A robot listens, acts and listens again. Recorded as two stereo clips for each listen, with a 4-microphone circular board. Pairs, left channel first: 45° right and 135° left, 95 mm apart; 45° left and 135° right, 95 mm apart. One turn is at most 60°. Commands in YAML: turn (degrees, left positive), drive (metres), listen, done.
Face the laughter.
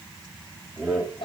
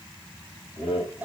turn: 45
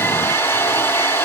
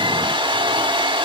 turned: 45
listen: true
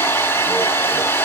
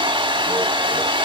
listen: true
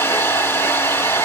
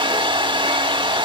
done: "Facing where the laughter came from. I can't hear it now."